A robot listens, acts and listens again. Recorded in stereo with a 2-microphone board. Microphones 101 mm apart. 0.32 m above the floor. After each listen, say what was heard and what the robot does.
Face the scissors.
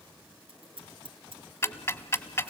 The scissors: about 65° right or 115° right. Turn 65° right.
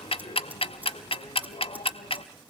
So it is at 20° right. Turn 20° right.
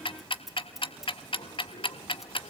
Facing the scissors, 2 to 4 m away.